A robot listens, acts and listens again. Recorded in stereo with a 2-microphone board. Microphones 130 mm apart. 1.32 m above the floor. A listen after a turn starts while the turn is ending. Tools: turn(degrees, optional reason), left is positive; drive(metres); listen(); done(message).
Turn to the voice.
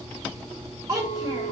turn(degrees=-30, reason="The child speaking: about 30° right or 150° right.")
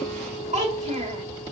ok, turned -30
turn(degrees=-120, reason="So it is at 120° right.")
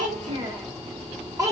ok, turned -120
turn(degrees=-25, reason="The child speaking is now 25° right.")
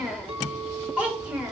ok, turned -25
turn(degrees=-10, reason="The child speaking is now 10° right.")
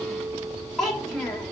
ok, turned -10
done("Facing the child speaking, 2 to 4 m away.")